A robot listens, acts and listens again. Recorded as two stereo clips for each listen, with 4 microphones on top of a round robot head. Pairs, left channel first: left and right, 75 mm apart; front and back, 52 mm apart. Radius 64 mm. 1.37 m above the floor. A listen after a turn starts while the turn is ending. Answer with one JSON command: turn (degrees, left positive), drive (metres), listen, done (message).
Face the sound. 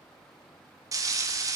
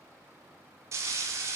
{"turn": -135}
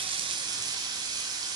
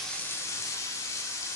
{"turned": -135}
{"turn": -45}
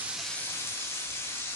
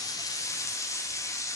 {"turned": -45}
{"turn": 25}
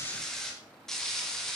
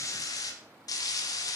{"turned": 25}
{"done": "Found it: frying, straight ahead, 1 to 2 m away."}